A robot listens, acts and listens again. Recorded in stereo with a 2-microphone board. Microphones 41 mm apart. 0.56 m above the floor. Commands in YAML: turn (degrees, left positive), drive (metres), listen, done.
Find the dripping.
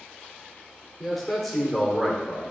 listen: true
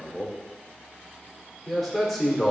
listen: true
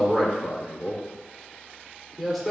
done: "I can't make out dripping to turn to."